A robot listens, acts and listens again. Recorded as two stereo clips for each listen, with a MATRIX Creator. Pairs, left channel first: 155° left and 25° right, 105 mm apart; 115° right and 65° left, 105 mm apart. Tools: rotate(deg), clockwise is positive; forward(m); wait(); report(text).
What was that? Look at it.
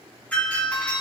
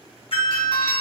rotate(130)
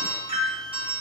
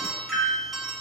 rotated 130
rotate(25)
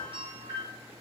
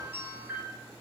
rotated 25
report("Facing the doorbell.")